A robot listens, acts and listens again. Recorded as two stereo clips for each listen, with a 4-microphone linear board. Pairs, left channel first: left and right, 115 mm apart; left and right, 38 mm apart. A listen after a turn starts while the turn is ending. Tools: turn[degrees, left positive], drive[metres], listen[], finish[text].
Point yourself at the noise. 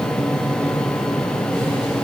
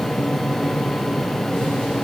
Action: listen[]
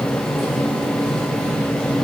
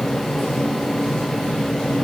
Action: listen[]
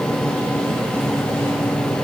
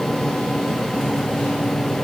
Action: finish[I can't make out anything.]